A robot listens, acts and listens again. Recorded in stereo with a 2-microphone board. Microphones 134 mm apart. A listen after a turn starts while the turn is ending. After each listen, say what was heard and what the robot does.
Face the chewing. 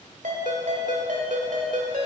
Keep listening.
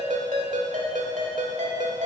Keep listening.
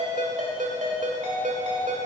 I can't make out chewing, only a ringtone.